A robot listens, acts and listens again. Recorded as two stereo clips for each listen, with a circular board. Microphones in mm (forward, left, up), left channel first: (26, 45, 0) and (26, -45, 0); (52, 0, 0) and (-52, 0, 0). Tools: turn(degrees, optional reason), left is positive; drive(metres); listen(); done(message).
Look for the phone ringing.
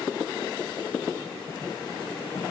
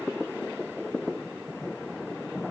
listen()
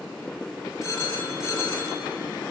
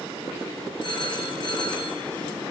turn(degrees=35, reason="The phone ringing: 35° left.")
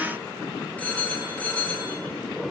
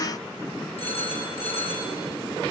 turn(degrees=15, reason="The phone ringing is now 15° left.")
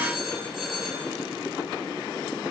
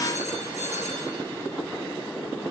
done("Found it: a phone ringing, straight ahead, over 4 m away.")